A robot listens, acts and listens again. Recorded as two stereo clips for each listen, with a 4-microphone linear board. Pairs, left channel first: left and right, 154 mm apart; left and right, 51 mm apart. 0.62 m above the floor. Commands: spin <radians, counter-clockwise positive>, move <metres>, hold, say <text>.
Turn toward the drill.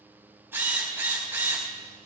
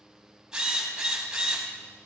spin -0.52
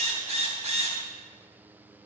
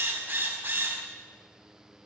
spin -2.36
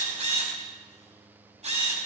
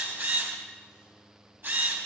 spin -0.87
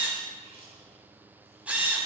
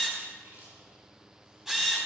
spin -0.17
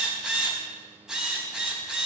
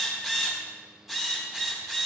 say Found it: a drill, straight ahead.